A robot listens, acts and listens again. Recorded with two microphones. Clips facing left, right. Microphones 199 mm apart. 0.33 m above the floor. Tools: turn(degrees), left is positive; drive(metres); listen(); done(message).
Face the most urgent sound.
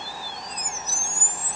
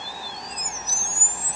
listen()
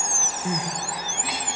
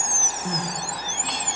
turn(degrees=30)
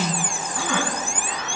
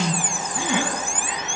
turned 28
turn(degrees=-20)
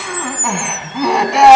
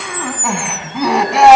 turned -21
done("Found it: crying, straight ahead.")